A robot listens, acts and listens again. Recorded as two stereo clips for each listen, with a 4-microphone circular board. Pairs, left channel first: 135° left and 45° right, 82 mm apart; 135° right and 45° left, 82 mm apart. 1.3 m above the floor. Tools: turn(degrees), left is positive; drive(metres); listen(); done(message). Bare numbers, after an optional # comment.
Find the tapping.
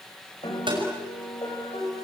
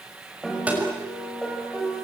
# The tapping: 30° right.
turn(-30)
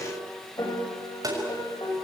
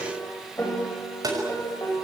done("Found it: tapping, straight ahead, over 4 m away.")